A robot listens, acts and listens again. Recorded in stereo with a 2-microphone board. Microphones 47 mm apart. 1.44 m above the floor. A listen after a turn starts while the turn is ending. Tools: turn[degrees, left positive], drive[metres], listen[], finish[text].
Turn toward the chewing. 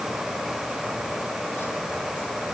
Action: listen[]
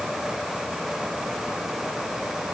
Action: listen[]
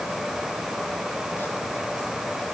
Action: finish[I can't make out chewing to turn to.]